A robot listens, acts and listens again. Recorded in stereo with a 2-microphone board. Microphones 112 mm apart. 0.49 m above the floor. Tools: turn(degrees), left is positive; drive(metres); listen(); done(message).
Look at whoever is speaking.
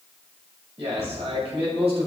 turn(degrees=-65)
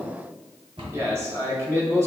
turn(degrees=-25)
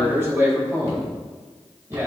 turn(degrees=-25)
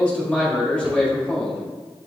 turn(degrees=10)
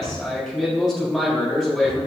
done("Found it: a man speaking, straight ahead, 1 to 2 m away.")